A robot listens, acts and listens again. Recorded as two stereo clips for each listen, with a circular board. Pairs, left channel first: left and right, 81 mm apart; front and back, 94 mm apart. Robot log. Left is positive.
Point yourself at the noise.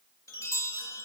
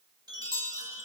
note: The chime: 135° left.
cmd yaw +135
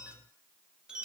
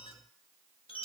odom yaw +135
note: The chime is now 10° right.
cmd yaw -10
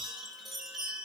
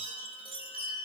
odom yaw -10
end: Found it: a chime, straight ahead.